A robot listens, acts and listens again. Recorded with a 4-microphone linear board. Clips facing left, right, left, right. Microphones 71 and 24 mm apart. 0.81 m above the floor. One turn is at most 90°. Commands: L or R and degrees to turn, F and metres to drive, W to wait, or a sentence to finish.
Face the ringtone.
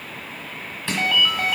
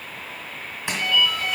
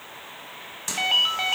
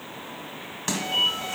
L90
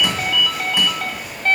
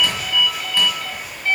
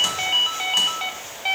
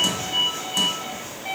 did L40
L60
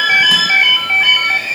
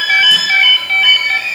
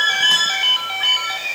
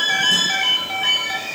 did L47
L15
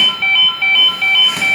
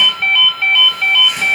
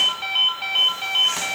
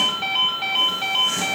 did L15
Facing the ringtone.